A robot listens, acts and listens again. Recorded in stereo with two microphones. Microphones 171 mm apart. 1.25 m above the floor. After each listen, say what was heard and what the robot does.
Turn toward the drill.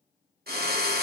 The drill: about 65° right or 115° right. Turn 65° right.
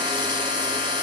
So it is at 30° right. Turn 30° right.
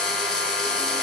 Found it: a drill, straight ahead, under 1 m away.